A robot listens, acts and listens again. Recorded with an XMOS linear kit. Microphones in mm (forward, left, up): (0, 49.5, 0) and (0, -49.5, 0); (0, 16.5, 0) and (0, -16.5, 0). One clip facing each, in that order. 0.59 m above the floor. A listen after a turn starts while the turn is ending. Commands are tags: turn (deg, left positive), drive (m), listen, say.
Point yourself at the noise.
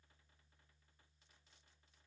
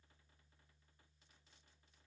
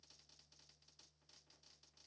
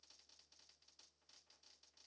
<listen/>
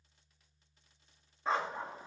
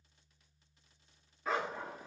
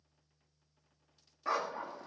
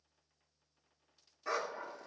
<turn deg="25"/>
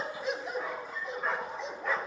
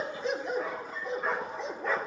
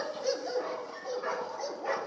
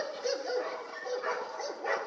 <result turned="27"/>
<say>Facing the dog barking, 1 to 2 m away.</say>